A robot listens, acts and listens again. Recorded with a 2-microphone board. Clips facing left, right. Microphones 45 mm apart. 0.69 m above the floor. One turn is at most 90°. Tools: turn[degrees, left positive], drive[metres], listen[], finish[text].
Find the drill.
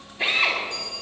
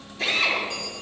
Thought: The drill: about 20° left or 160° left.
Action: turn[20]
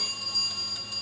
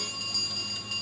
Action: listen[]
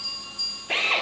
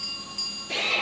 Thought: So it is at 135° left.
Action: turn[90]
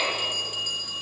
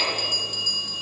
Thought: Nothing new. It was at 45° left.
Action: turn[45]
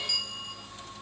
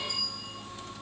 Action: listen[]
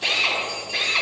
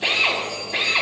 Thought: The drill is now 15° right.
Action: turn[-15]
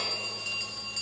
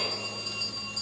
Action: listen[]
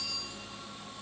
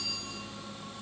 Action: listen[]
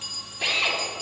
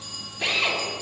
Action: finish[Facing the drill, over 4 m away.]